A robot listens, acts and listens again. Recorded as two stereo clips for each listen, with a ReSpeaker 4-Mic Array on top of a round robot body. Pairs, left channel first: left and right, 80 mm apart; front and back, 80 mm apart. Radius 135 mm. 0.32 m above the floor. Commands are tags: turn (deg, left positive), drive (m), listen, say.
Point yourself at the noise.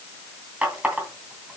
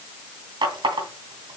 <turn deg="-165"/>
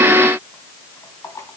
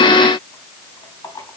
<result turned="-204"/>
<turn deg="40"/>
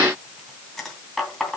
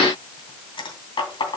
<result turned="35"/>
<say>Found it: a running tap, straight ahead.</say>